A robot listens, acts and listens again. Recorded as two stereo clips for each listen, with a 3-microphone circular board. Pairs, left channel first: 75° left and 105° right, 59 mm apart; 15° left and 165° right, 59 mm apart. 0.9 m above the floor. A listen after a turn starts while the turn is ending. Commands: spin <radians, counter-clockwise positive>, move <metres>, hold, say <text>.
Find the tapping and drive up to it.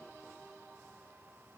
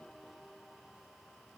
hold
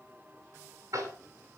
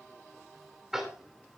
spin -1.40
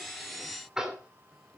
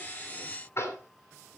spin -0.44
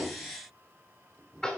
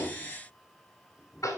move 1.0
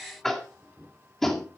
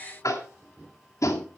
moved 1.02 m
spin -0.17
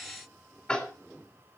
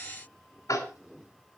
move 1.0
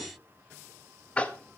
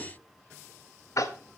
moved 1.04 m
move 1.0
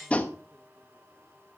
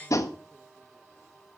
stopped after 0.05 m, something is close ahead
spin 0.17
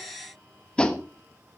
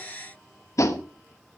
say Arrived at the tapping, straight ahead.